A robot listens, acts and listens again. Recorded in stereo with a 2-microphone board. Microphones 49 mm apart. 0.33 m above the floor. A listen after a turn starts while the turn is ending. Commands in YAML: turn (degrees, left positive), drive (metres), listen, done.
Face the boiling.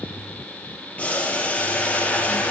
turn: 25
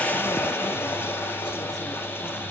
turn: 130
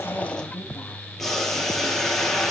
done: "Facing the boiling."